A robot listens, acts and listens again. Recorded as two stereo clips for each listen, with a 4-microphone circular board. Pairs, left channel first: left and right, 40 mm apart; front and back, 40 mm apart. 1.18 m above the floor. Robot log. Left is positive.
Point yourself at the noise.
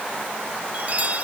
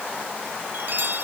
note: The chime: 145° right.
cmd yaw -145
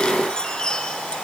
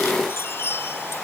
note: The chime is now 20° left.
cmd yaw +20
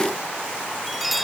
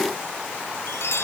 end: Found it: a chime, straight ahead.